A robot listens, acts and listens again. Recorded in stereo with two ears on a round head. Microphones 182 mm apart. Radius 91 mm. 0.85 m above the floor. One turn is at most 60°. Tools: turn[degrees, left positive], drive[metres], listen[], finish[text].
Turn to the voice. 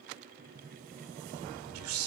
Action: turn[-60]
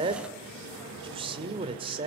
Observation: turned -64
Thought: So it is at 30° right.
Action: turn[-30]
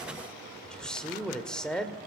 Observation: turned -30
Action: finish[Facing the man speaking, 2 to 4 m away.]